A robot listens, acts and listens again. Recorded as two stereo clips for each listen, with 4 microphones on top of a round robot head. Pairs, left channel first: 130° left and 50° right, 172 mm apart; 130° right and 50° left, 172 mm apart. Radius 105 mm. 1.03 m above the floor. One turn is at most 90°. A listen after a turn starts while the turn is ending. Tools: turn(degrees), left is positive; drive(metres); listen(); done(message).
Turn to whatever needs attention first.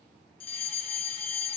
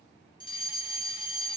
turn(degrees=90)
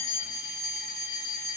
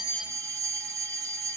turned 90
turn(degrees=90)
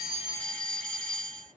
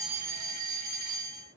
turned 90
turn(degrees=45)
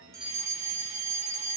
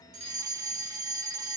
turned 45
turn(degrees=-15)
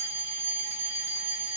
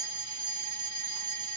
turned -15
done("Found it: a fire alarm, straight ahead, 2 to 4 m away.")